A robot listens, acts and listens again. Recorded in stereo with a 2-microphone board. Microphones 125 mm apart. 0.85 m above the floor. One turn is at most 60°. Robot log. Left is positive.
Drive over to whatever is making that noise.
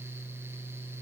cmd idle
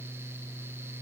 cmd idle
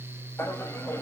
note: The laughter: about 20° left or 160° left.
cmd yaw +20
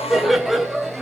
cmd fwd 1.0
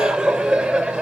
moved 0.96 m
cmd fwd 1.0
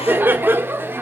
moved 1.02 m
note: The laughter is now 15° right.
cmd yaw -15
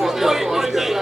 cmd fwd 1.0
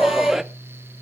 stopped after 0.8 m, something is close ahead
end: I am next to the laughter.